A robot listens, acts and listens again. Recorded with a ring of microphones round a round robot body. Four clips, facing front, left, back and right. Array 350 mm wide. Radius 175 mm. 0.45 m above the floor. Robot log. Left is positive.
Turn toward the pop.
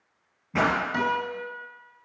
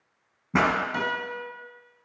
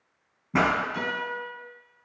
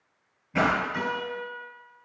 note: The pop: 115° left.
cmd yaw +115
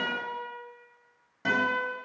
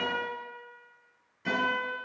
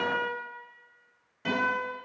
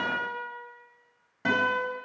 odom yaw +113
end: I heard a pop from this way, but can't make it out now.